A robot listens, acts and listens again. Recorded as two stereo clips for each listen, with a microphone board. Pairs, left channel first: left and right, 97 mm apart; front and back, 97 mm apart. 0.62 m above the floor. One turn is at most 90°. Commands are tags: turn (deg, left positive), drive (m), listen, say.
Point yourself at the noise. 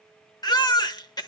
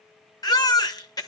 <turn deg="45"/>
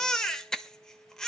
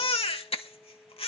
<say>Found it: a baby crying, straight ahead.</say>